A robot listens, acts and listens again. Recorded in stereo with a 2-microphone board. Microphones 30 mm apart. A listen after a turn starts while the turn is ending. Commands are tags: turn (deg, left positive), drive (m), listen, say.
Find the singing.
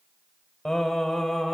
<turn deg="30"/>
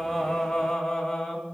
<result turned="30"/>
<turn deg="30"/>
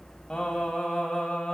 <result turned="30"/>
<turn deg="160"/>
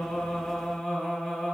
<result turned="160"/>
<turn deg="15"/>
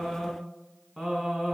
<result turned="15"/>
<say>Facing the singing.</say>